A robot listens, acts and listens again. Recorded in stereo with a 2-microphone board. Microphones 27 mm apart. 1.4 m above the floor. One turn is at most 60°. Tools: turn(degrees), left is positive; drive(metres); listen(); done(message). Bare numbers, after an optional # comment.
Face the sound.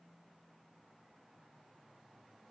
listen()
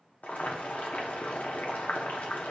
turn(60)
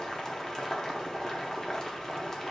# So it is at 25° left.
turn(25)
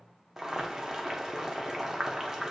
# The boiling is now 15° right.
turn(-15)
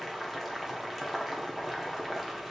done("Facing the boiling.")